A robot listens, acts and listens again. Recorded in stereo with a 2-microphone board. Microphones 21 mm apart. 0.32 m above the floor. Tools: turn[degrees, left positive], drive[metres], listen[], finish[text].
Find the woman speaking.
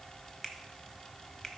Action: listen[]
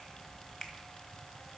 Action: listen[]
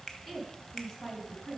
Thought: The woman speaking: about 25° left or 155° left.
Action: turn[25]
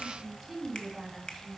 Action: finish[Found it: a woman speaking, straight ahead, 2 to 4 m away.]